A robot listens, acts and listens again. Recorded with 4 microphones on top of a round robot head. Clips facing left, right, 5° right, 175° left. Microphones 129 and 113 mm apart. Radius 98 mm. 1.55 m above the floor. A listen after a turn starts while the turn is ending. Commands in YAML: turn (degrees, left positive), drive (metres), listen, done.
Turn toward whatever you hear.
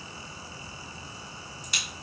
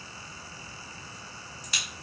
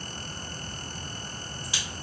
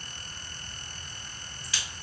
turn: -75
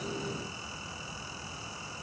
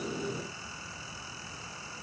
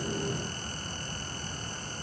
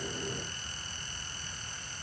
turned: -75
done: "Facing where the crack came from. I can't hear it now."